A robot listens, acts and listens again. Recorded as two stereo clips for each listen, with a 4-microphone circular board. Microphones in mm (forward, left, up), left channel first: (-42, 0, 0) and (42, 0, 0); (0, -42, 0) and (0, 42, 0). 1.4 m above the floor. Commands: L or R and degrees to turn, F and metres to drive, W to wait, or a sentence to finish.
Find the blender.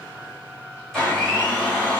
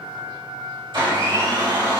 L100
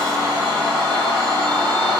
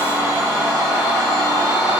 L30
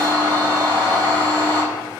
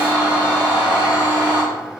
L15
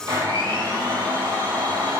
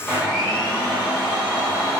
Facing the blender, 1 to 2 m away.